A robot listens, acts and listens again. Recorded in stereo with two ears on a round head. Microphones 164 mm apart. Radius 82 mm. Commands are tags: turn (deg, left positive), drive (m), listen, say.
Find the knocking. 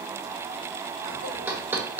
<turn deg="-30"/>
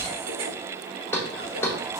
<turn deg="15"/>
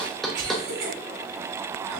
<say>Facing the knocking.</say>